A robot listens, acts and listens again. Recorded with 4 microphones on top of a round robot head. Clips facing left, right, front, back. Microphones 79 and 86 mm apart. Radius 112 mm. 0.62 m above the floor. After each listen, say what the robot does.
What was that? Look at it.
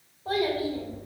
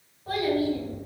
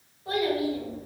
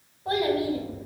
Turn 125° left.
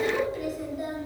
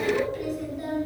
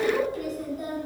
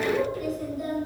Turn 10° left.
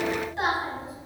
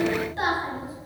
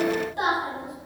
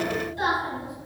Found it: a child speaking, straight ahead, 2 to 4 m away.